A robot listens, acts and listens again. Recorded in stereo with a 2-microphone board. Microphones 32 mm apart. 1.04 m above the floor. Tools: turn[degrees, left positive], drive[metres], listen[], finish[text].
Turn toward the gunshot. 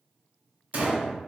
Thought: The gunshot: about 60° right or 120° right.
Action: turn[-60]
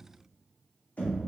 Action: listen[]
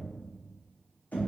Action: finish[I heard a gunshot, but can't make it out now. It was about straight ahead or 60° right.]